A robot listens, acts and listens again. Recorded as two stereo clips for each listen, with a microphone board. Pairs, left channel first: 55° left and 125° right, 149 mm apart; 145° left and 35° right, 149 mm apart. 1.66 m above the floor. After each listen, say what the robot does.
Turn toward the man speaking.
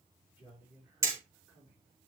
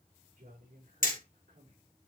Turn 45° right.
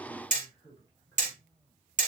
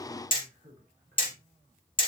Turn 10° right.
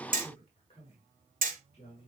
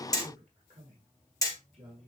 Turn 10° left.
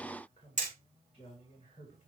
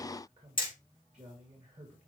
Facing the man speaking, 2 to 4 m away.